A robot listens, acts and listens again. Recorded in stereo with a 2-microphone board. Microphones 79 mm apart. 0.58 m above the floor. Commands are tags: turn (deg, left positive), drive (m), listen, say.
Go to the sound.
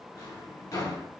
<turn deg="50"/>
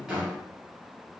<drive m="1.0"/>
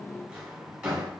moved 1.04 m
<turn deg="-10"/>
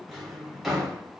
<drive m="1.0"/>
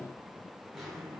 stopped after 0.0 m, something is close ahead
<say>I am next to the drawer.</say>